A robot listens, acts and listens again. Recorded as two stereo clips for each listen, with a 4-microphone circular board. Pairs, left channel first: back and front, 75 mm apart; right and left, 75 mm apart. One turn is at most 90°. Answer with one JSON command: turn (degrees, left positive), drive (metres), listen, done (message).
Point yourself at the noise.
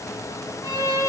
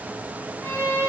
{"turn": -90}
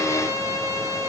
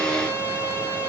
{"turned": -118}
{"turn": -50}
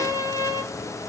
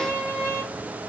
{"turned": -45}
{"done": "Found it: a violin, straight ahead, 1 to 2 m away."}